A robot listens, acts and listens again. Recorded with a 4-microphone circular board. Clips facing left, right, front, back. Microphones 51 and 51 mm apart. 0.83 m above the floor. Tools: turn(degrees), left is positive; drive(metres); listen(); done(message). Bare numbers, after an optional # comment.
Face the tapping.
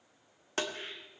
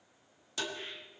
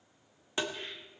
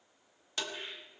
# The tapping: 60° left.
turn(60)
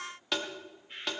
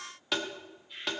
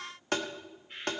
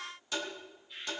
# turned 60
done("Found it: tapping, straight ahead.")